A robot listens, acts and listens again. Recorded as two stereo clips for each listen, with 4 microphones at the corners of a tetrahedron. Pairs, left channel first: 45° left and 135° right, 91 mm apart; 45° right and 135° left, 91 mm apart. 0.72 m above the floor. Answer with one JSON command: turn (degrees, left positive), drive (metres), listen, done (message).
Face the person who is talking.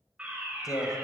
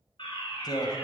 {"done": "Found it: a man speaking, straight ahead."}